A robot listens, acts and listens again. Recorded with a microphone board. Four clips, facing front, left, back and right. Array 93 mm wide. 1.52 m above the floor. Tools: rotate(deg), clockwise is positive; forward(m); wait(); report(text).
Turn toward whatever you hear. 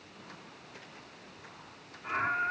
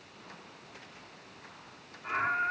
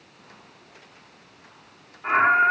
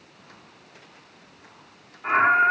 rotate(140)
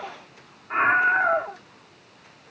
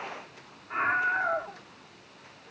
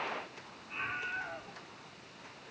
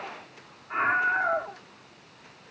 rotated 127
rotate(15)
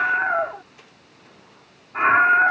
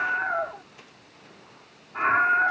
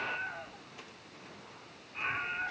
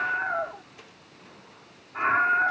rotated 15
report("Found it: a scream, straight ahead.")